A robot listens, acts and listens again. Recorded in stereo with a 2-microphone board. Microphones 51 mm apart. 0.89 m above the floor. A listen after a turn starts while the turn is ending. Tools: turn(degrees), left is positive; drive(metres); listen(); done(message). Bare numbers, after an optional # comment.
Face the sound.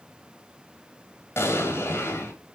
# The explosion: about 60° left or 120° left.
turn(60)
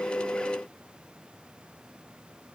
listen()
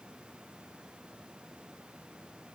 done("I heard an explosion, but can't make it out now. It was about straight ahead or 60° left.")